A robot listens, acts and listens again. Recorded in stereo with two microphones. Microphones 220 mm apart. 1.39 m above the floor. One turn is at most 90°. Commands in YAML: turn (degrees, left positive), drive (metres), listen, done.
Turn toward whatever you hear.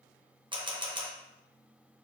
turn: -20
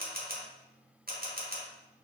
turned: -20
turn: -90
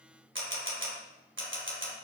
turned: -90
turn: -65
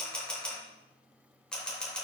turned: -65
done: "Facing the camera shutter."